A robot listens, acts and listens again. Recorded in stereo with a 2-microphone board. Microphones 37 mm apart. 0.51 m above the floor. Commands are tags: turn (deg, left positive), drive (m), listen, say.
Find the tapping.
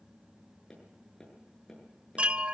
<turn deg="30"/>
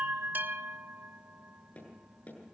<turn deg="135"/>
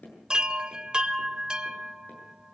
<turn deg="45"/>
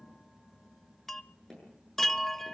<turn deg="10"/>
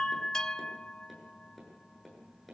<say>Found it: tapping, straight ahead.</say>